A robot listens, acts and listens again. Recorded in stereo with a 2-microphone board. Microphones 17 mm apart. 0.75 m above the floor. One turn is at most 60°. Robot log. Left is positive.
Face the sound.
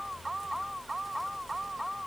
cmd idle
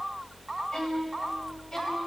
note: The violin: about 40° left or 140° left.
cmd yaw +40
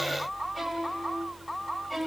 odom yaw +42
end: Facing the violin.